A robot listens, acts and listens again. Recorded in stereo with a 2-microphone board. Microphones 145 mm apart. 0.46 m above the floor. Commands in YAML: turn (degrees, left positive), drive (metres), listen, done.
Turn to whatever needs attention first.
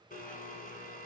listen: true
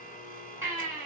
turn: -20
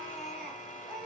done: "Found it: a baby crying, straight ahead."